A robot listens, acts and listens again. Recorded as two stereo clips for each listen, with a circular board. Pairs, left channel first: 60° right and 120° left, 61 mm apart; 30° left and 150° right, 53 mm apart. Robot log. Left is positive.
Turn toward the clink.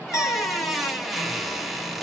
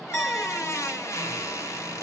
note: The clink: 15° right.
cmd yaw -15
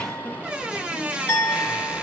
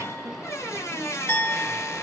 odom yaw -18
end: Found it: a clink, straight ahead.